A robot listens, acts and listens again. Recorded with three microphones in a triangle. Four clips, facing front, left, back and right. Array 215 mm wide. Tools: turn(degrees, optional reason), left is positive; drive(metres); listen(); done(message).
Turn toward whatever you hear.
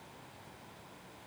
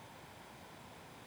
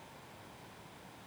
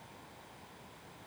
listen()
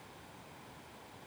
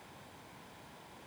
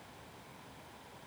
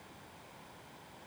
listen()
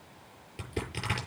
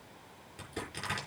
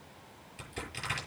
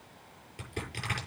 turn(degrees=10, reason="The crushing: 10° left.")
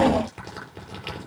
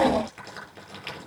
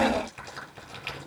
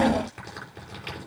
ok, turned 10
done("Facing the crushing, over 4 m away.")